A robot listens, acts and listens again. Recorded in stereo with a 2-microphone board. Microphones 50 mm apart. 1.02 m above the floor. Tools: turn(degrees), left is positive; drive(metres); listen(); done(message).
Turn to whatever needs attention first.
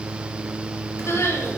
turn(degrees=65)
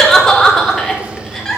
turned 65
turn(degrees=10)
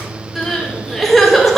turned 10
done("Found it: crying, straight ahead.")